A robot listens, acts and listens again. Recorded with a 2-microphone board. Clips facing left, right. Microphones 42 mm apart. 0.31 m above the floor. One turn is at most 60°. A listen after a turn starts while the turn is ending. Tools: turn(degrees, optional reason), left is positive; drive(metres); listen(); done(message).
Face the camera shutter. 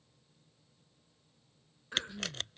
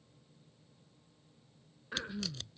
turn(degrees=55, reason="The camera shutter: about 55° left or 125° left.")
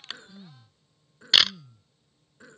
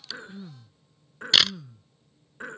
done("Found it: a camera shutter, straight ahead.")